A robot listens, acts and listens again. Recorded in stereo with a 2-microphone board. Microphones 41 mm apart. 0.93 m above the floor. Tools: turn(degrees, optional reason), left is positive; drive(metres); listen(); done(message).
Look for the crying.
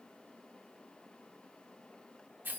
listen()
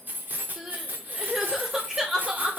turn(degrees=-15, reason="The crying: about 15° right or 165° right.")
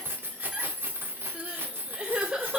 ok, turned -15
turn(degrees=-150, reason="So it is at 150° right.")
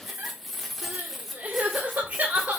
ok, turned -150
turn(degrees=-40, reason="The crying is now 40° right.")
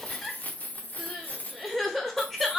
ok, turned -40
turn(degrees=10, reason="The crying is now 10° left.")
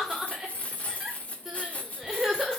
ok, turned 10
done("Facing the crying, 2 to 4 m away.")